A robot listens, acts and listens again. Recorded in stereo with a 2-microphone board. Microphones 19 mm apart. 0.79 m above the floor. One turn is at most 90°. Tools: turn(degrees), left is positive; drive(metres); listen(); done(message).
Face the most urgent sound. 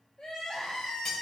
turn(degrees=55)
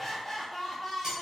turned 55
turn(degrees=15)
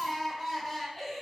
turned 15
done("Found it: crying, straight ahead.")